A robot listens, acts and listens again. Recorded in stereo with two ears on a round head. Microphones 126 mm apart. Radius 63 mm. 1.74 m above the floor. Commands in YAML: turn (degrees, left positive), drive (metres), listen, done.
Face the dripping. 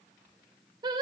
listen: true
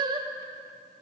listen: true
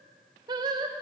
done: "I can't make out dripping to turn to."